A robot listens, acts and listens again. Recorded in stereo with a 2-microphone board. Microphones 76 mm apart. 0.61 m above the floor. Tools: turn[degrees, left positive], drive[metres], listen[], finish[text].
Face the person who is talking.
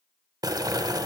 Action: listen[]
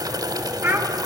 Thought: The child speaking: about 25° right or 155° right.
Action: turn[-25]
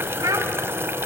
Thought: So it is at 130° right.
Action: turn[-130]
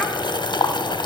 Action: listen[]
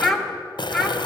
Action: finish[Found it: a child speaking, straight ahead, 1 to 2 m away.]